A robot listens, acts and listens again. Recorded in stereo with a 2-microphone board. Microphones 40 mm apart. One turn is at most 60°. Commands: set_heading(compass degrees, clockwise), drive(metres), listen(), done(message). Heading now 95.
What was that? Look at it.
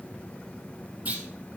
set_heading(130)
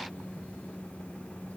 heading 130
listen()
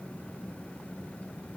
done("I heard a clunk, but can't make it out now. It was about straight ahead or 110° right.")